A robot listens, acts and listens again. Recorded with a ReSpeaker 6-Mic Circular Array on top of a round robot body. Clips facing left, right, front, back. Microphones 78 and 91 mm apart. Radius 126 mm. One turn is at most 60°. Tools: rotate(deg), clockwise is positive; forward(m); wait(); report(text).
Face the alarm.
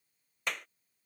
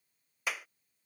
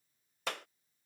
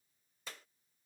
wait()
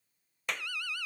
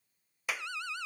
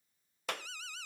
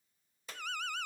rotate(60)
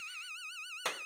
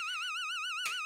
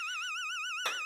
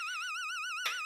rotate(60)
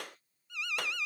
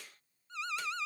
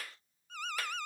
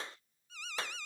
rotate(35)
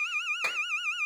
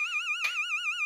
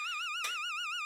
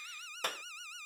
report("Facing the alarm.")